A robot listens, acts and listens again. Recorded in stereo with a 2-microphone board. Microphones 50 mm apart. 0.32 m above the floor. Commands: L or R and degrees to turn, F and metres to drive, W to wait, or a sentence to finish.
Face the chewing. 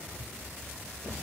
W
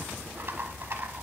W
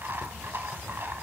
I can't make out chewing to turn to.